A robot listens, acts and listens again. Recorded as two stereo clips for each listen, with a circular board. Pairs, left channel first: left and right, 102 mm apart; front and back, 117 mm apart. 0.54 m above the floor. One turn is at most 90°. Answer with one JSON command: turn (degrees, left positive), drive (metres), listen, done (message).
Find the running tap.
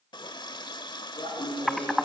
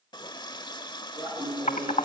{"turn": 50}
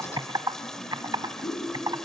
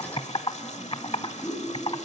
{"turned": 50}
{"done": "Found it: a running tap, straight ahead, 1 to 2 m away."}